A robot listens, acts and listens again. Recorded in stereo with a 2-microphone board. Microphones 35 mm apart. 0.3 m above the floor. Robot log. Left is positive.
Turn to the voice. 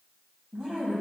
note: The woman speaking: about 20° right or 160° right.
cmd yaw -20
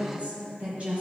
note: So it is at 135° right.
cmd yaw -135
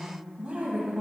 note: The woman speaking is now 40° right.
cmd yaw -40
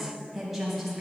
end: Found it: a woman speaking, straight ahead, 1 to 2 m away.